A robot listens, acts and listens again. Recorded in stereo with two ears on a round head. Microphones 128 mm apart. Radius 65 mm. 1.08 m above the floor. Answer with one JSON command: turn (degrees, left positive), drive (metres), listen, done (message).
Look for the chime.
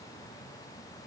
{"listen": true}
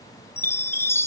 {"turn": 15}
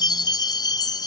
{"turn": 150}
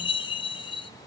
{"turn": 40}
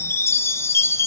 {"turn": 20}
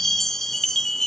{"done": "Found it: a chime, straight ahead."}